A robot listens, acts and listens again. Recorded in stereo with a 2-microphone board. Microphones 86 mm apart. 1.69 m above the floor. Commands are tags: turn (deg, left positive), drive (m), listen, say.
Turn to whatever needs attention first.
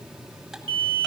<turn deg="-70"/>
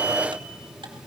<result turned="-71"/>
<listen/>
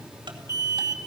<turn deg="-40"/>
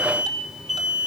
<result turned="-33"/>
<say>Facing the alarm, 2 to 4 m away.</say>